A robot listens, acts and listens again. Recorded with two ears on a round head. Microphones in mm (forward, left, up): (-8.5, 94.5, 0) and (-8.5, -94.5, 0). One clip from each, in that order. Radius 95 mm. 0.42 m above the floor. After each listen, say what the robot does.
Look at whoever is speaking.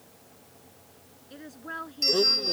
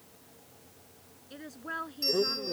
Turn 30° right.
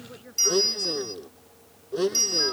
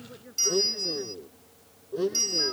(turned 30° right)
Turn 25° left.
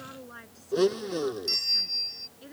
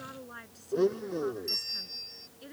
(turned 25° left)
Turn 10° right.
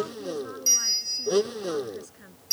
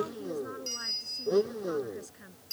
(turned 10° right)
Facing the woman speaking.